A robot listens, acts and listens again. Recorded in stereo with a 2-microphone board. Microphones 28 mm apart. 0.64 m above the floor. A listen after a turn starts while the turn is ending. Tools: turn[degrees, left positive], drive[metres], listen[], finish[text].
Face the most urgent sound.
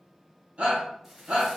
Thought: The shout: about 60° right or 120° right.
Action: turn[-60]
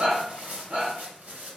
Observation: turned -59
Thought: So it is at 55° right.
Action: turn[-55]
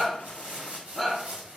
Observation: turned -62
Action: finish[Found it: a shout, straight ahead.]